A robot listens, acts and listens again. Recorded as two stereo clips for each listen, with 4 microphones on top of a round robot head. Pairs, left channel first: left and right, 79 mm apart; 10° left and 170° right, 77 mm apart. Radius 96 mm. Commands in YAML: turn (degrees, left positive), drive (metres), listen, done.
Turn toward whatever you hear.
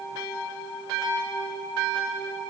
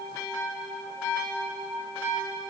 listen: true
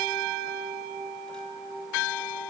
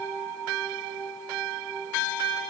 listen: true
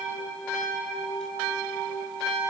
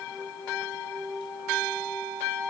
done: "I can't make out anything to turn to."